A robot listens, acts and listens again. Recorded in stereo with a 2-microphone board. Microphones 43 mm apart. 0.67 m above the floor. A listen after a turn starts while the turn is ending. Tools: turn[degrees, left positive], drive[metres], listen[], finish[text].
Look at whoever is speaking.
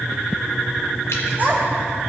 Thought: The child speaking: about 40° right or 140° right.
Action: turn[-40]
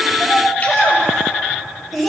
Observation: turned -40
Action: finish[Facing the child speaking.]